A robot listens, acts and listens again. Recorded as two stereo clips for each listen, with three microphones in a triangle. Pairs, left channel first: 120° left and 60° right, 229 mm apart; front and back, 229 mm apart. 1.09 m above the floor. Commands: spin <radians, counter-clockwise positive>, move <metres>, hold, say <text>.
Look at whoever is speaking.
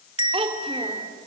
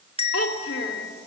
say Facing the child speaking.